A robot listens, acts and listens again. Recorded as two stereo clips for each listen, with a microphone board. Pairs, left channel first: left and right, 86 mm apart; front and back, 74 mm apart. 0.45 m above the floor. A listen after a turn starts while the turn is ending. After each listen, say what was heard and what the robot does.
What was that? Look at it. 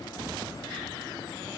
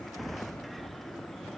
Keep listening.
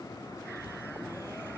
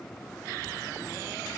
Keep listening.
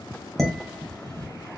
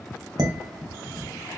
The dishes clattering: 175° left. Turn 175° left.
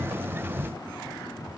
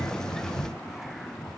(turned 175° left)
Keep listening.
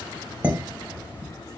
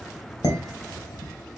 The dishes clattering is now 20° right. Turn 20° right.
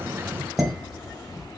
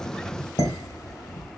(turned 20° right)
Facing the dishes clattering, 1 to 2 m away.